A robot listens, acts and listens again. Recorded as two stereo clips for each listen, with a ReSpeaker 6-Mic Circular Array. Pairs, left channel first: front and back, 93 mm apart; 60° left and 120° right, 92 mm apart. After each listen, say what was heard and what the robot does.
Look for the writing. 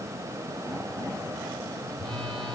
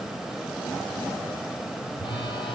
Keep listening.
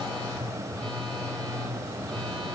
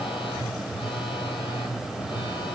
Keep listening.
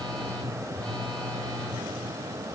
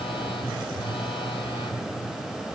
I can't make out writing to turn to.